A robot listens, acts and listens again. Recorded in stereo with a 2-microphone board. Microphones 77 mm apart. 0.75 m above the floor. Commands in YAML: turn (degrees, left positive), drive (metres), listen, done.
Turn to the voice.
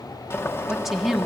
turn: 30
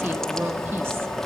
listen: true
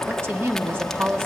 turn: -35
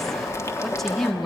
done: "Found it: a woman speaking, straight ahead, 1 to 2 m away."